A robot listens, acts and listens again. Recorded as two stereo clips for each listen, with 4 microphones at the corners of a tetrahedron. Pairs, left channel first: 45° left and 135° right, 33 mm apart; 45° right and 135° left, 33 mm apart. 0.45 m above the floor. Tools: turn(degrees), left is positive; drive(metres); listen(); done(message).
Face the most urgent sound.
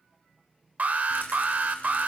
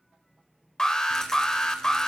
turn(degrees=-115)
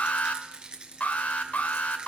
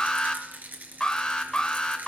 turn(degrees=20)
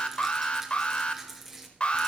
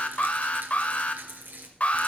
done("Facing the alarm.")